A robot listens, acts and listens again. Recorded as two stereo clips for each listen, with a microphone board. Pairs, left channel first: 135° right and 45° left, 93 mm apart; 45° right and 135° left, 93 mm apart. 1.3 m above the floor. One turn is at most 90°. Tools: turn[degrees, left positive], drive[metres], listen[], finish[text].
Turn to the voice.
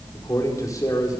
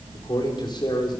Thought: The man speaking: 80° right.
Action: turn[-80]
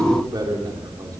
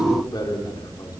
Action: finish[Facing the man speaking.]